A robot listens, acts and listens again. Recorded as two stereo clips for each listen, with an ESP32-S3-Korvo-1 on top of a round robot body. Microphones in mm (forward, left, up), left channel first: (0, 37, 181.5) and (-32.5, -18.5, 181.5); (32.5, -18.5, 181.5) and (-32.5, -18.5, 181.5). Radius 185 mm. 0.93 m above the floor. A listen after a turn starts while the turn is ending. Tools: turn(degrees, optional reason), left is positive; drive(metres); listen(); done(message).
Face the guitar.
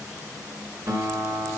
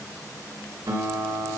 turn(degrees=-155, reason="The guitar: 155° right.")
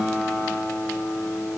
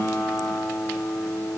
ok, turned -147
turn(degrees=-10, reason="The guitar is now 10° right.")
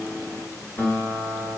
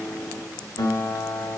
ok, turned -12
done("Found it: a guitar, straight ahead.")